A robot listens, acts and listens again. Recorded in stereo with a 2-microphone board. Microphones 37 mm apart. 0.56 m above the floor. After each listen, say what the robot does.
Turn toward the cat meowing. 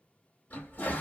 Keep listening.
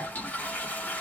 Keep listening.
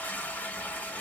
I can't make out a cat meowing, only a toilet flushing.